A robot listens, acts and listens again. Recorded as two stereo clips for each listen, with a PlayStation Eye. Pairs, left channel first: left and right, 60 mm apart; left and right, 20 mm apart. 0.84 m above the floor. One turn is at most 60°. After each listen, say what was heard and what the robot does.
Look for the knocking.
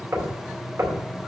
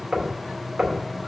The knocking: about 50° right or 130° right. Turn 50° right.
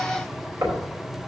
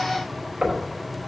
So it is at 85° right. Turn 60° right.
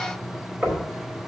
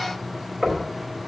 The knocking is now 35° right. Turn 35° right.
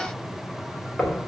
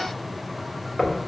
Facing the knocking.